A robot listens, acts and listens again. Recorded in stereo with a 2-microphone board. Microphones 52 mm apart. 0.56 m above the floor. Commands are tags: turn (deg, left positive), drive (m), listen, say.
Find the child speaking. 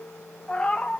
<listen/>
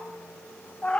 <listen/>
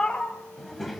<turn deg="30"/>
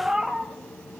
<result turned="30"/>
<turn deg="165"/>
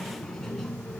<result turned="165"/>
<turn deg="10"/>
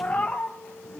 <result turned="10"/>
<say>Facing the child speaking, 2 to 4 m away.</say>